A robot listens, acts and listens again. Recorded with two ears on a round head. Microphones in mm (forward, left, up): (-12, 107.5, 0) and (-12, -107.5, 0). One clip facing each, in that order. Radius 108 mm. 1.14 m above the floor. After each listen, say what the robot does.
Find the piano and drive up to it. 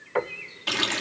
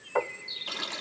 Turn 35° left.
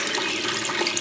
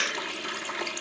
Keep listening.
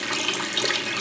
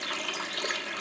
Keep listening.
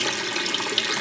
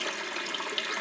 I heard a piano, but can't make it out now. It was about straight ahead or 110° left. I did not reach it.